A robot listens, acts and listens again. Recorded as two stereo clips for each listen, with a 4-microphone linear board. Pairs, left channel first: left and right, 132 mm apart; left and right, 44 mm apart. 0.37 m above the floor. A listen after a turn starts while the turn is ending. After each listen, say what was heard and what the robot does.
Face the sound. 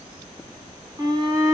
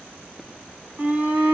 The shout: about 30° right or 150° right. Turn 30° right.
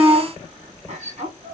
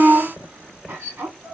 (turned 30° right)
So it is at 115° right. Turn 115° right.
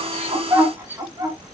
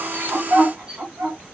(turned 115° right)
The shout is now 20° right. Turn 20° right.
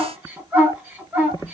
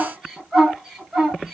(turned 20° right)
The shout is now 10° right. Turn 10° right.
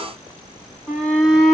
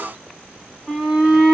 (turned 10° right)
Found it: a shout, straight ahead, 2 to 4 m away.